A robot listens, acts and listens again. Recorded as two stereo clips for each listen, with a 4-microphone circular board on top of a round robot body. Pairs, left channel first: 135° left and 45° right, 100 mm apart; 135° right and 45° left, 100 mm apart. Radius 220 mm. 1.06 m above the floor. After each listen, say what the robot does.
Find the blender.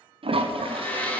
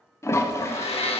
Turn 150° right.
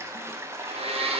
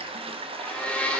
Turn 55° right.
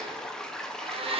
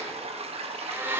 Turn 25° right.
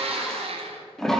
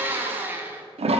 Turn 25° right.
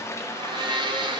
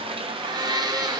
Facing the blender, 1 to 2 m away.